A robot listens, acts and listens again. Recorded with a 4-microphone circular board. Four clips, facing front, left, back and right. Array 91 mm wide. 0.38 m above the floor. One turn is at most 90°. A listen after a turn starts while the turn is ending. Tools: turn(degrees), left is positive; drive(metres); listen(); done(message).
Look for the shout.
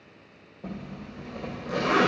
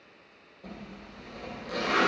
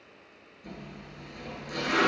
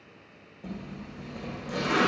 listen()
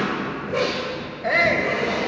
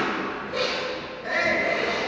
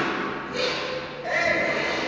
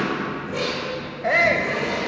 turn(degrees=-65)
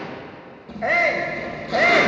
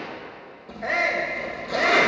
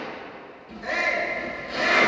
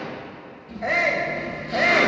turn(degrees=-10)
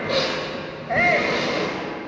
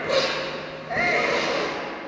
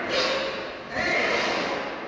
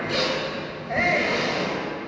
done("Found it: a shout, straight ahead.")